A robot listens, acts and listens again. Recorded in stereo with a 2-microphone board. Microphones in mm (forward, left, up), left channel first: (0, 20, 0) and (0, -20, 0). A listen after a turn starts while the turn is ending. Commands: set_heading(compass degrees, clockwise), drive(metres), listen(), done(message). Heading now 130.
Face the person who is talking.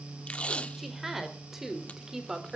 set_heading(160)
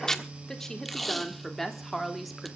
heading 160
done("Facing the woman speaking, 2 to 4 m away.")